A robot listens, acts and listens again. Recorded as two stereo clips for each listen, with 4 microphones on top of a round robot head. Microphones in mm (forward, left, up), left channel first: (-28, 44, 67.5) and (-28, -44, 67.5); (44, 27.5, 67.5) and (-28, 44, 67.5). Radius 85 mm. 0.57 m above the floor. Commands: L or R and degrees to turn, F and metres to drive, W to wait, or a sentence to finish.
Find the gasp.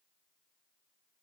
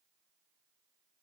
W
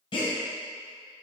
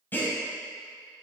L50
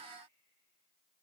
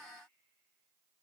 Facing where the gasp came from. I can't hear it now.